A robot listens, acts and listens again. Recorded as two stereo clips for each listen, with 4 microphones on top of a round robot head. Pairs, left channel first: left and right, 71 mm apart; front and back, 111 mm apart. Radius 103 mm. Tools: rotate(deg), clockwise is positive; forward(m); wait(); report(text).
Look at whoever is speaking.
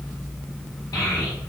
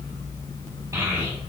rotate(-120)
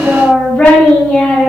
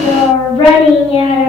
rotate(-25)
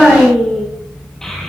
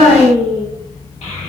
rotate(-10)
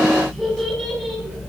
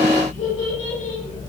report("Found it: a child speaking, straight ahead, 1 to 2 m away.")